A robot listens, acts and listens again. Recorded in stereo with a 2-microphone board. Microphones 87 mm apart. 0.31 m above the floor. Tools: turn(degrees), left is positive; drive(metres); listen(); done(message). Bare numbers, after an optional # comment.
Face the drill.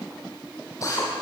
# The drill: about 40° left or 140° left.
turn(40)
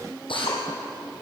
# So it is at 105° left.
turn(105)
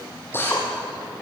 # The drill is now 25° left.
turn(25)
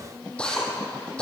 # The drill is now 10° left.
turn(10)
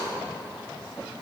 listen()
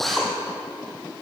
done("Found it: a drill, straight ahead.")